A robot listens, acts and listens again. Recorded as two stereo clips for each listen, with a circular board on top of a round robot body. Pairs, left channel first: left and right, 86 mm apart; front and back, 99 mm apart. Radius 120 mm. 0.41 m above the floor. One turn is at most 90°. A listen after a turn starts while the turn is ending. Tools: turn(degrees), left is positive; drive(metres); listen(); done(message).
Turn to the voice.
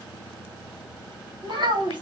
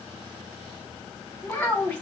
turn(degrees=-80)
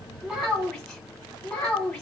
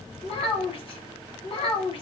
done("Facing the child speaking, 1 to 2 m away.")